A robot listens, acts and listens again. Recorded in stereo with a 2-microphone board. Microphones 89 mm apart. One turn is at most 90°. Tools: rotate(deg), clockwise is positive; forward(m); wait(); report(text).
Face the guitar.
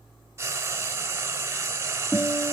rotate(-40)
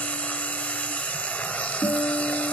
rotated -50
rotate(-85)
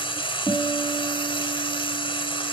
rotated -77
rotate(-10)
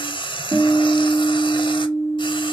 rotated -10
report("Found it: a guitar, straight ahead.")